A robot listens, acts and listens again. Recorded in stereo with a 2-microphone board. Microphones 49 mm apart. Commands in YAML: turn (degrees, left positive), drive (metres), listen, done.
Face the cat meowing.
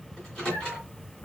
turn: 40
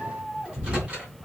turn: -10
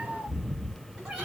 turn: -15
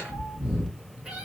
turn: -15
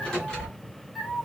done: "Facing the cat meowing, 2 to 4 m away."